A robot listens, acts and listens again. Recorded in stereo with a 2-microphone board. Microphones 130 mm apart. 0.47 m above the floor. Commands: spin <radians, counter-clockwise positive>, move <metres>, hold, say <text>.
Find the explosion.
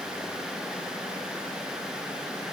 hold
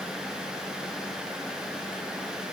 hold
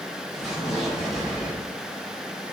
spin 0.52
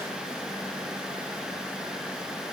hold
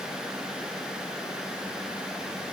say I heard an explosion, but can't make it out now. It was about 30° right or 150° left.